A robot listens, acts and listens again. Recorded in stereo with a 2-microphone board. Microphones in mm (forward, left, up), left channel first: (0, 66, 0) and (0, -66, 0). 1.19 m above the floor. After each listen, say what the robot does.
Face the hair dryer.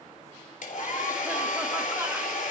Turn 75° left.
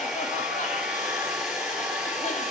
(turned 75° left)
Facing the hair dryer.